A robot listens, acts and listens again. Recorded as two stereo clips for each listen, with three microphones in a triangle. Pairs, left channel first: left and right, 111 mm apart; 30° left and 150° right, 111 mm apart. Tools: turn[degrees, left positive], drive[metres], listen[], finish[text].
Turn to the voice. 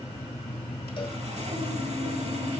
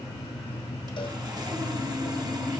Action: listen[]
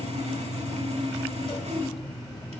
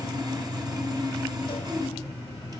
Action: listen[]
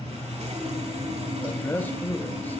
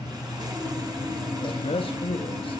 Thought: The man speaking: 20° left.
Action: turn[20]
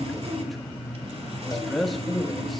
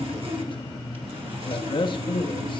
Action: finish[Found it: a man speaking, straight ahead.]